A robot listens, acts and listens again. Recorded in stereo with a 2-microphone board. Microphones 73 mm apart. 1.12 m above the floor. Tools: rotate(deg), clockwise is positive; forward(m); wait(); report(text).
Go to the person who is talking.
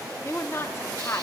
rotate(-35)
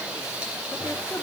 wait()
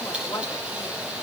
wait()
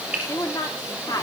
rotate(-110)
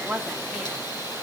forward(1.0)
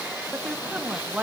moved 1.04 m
rotate(10)
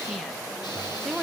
forward(1.0)
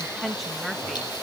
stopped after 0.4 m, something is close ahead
report("Arrived at the woman speaking, straight ahead.")